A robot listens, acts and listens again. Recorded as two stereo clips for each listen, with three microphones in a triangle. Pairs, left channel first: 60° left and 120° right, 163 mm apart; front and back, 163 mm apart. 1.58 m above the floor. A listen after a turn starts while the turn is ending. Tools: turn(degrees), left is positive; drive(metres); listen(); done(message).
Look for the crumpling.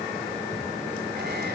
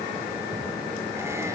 listen()
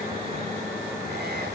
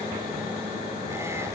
listen()
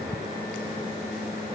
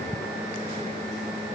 done("I can't make out crumpling to turn to.")